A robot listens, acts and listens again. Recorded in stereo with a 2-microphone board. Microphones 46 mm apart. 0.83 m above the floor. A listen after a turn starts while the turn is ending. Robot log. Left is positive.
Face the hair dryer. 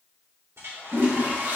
note: The hair dryer: about 75° right or 105° right.
cmd yaw -75
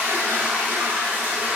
cmd idle
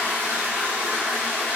cmd idle
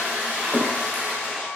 note: So it is at 10° right.
cmd yaw -10
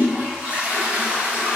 cmd idle
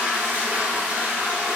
cmd idle
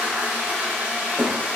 end: Facing where the hair dryer came from. I can't hear it now.